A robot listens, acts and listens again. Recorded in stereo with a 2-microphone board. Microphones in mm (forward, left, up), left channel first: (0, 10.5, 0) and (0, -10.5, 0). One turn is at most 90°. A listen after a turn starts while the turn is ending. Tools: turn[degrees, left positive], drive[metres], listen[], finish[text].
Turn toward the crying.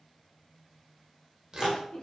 Thought: The crying: about 45° left or 135° left.
Action: turn[45]
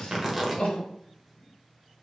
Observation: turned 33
Thought: So it is at 100° left.
Action: turn[90]
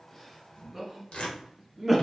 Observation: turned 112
Thought: The crying is now 10° right.
Action: turn[-10]
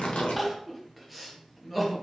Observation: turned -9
Action: finish[Facing the crying, under 1 m away.]